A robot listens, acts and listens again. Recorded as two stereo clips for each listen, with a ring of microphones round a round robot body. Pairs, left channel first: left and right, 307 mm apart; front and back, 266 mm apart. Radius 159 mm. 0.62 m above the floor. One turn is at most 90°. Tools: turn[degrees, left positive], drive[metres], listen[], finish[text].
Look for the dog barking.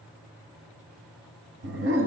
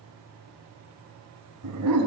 Thought: The dog barking: 140° right.
Action: turn[-90]
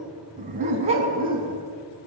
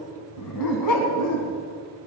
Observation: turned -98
Thought: The dog barking is now 15° right.
Action: turn[-15]
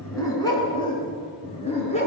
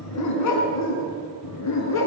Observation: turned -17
Thought: The dog barking is now 20° left.
Action: turn[20]
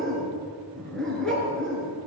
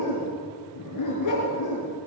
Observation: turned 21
Action: finish[Found it: a dog barking, straight ahead.]